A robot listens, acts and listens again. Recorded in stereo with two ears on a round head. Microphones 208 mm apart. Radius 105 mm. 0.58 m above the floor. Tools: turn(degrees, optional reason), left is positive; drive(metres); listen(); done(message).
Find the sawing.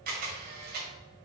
listen()
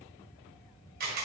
listen()
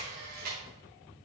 done("I can't make out sawing to turn to.")